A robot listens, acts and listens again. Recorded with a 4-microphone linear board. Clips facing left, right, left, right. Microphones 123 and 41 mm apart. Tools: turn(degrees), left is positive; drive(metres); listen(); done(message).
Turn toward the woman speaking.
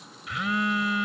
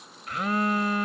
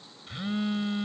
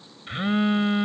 listen()
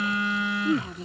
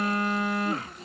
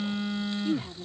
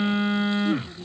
turn(degrees=25)
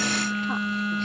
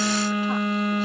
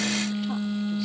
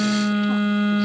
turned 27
listen()
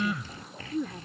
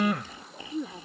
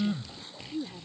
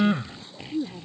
turn(degrees=-10)
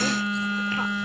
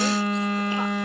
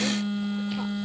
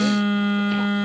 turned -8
listen()
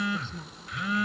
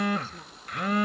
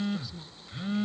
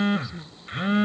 turn(degrees=-10)
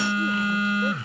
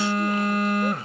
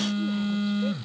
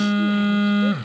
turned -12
listen()
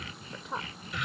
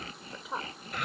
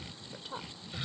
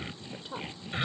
done("Facing the woman speaking.")